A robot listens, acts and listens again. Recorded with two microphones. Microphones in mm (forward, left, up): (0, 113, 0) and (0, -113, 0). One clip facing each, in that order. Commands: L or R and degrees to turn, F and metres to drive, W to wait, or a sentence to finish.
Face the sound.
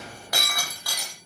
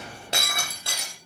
R25
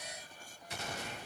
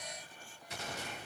W
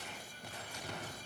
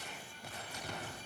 I heard breaking glass, but can't make it out now. It was about straight ahead or 130° right.